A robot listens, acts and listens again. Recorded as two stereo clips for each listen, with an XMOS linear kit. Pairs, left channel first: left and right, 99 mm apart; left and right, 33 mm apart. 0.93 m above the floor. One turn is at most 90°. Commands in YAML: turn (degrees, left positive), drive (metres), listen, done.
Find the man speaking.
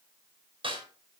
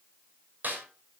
listen: true
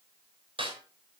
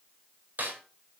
listen: true
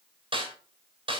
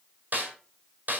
done: "I can't make out a man speaking to turn to."